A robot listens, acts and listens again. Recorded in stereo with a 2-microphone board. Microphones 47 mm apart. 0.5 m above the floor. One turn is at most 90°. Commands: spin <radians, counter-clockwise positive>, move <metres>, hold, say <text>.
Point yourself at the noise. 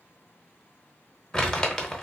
spin 0.26
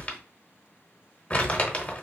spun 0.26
spin 1.57
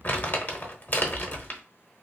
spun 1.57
spin 0.87
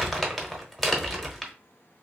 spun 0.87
say Found it: crumpling, straight ahead, under 1 m away.